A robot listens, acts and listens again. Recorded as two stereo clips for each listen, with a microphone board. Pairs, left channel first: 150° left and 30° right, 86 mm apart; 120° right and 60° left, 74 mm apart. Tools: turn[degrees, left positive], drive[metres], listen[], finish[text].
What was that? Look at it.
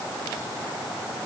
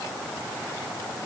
Action: listen[]
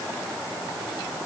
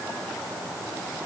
Action: listen[]
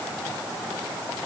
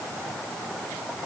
Action: finish[I can't make out anything to turn to.]